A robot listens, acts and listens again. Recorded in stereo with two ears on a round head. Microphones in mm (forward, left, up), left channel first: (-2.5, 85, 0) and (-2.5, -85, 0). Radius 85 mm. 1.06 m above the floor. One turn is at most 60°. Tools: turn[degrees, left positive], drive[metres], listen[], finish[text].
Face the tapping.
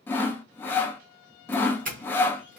Action: listen[]
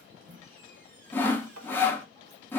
Action: turn[-60]
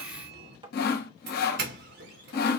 Thought: So it is at 25° right.
Action: turn[-25]
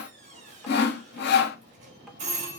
Action: listen[]
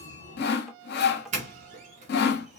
Action: listen[]
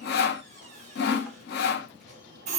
Action: finish[Facing where the tapping came from. I can't hear it now.]